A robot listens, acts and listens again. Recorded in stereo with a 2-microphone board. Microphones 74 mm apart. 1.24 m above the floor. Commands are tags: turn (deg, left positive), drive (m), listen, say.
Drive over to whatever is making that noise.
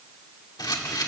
<turn deg="70"/>
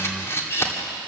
<turn deg="40"/>
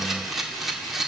<drive m="1.0"/>
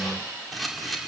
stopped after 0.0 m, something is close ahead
<say>Something is in my way. I am facing the camera shutter but have not reached it.</say>